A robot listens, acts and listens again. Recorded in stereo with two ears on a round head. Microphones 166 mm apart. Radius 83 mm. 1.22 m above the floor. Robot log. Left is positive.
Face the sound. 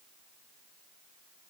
cmd idle
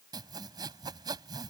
note: The sawing: about 20° right or 160° right.
cmd yaw -20
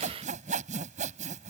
note: So it is at 140° right.
cmd yaw -140
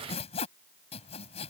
note: The sawing is now 35° left.
cmd yaw +35
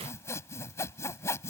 note: The sawing is now 15° left.
cmd yaw +15
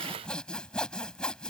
end: Facing the sawing.